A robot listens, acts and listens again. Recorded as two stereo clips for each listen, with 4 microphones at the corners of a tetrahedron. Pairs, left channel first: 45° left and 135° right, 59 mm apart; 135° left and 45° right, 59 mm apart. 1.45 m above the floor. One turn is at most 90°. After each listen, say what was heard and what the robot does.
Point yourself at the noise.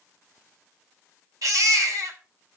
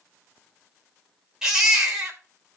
The baby crying: 125° right. Turn 90° right.
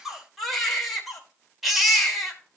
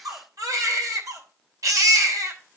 The baby crying is now 45° right. Turn 45° right.
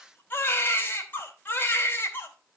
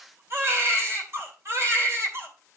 The baby crying is now 10° right. Turn 10° right.
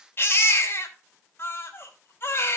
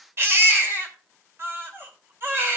Facing the baby crying.